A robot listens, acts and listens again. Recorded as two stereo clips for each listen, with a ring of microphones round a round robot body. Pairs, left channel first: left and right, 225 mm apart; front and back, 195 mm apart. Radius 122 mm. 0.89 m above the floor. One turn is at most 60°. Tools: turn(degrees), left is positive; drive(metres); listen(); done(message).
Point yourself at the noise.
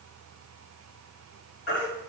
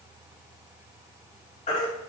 turn(degrees=55)
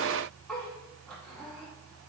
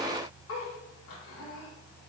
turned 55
done("Facing the baby crying, 2 to 4 m away.")